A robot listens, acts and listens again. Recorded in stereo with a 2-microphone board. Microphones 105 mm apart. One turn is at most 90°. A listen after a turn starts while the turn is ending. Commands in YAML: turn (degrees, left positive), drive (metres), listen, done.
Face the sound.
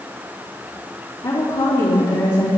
turn: 30
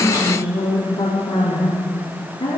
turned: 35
turn: 90
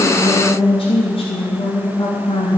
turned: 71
turn: 65
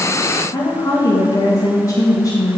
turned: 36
turn: 30
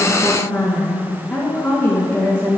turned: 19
turn: 10
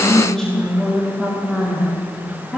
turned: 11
done: "Facing the woman speaking, 2 to 4 m away."